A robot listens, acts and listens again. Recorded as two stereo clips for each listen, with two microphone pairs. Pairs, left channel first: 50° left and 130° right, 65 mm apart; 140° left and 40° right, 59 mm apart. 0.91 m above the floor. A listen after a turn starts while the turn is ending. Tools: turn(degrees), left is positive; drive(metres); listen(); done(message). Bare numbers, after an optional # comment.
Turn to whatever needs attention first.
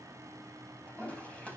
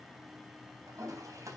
listen()
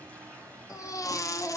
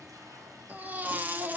# The baby crying: 20° left.
turn(20)
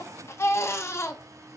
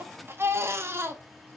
done("Facing the baby crying, 1 to 2 m away.")